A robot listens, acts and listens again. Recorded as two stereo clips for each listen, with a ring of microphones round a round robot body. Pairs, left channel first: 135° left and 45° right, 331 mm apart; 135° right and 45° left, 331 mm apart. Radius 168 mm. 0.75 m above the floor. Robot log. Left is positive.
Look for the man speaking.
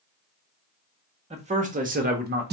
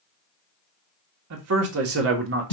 end: Found it: a man speaking, straight ahead, 1 to 2 m away.